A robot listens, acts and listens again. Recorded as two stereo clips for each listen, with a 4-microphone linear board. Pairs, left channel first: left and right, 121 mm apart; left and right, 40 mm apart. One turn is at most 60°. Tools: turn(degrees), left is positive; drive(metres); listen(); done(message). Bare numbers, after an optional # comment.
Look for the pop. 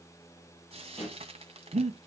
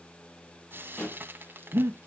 # The pop: about 55° left or 125° left.
turn(55)
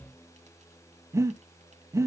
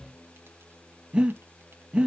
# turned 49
listen()
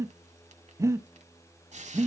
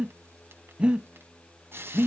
done("I heard a pop, but can't make it out now. It was about 5° left or 75° left.")